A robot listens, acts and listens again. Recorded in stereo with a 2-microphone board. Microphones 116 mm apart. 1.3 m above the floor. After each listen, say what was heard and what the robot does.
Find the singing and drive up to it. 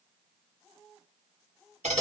Keep listening.
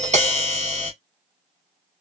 Keep listening.
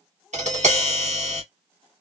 I can't make out singing to turn to.